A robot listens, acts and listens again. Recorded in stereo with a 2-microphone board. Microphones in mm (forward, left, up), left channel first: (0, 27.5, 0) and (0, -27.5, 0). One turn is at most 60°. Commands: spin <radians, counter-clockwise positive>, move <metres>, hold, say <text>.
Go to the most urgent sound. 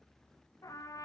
hold
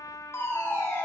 spin 0.79
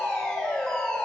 move 1.0
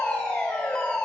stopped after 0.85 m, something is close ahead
spin 0.17
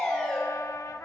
say Something is in my way. I am facing the fire alarm but have not reached it.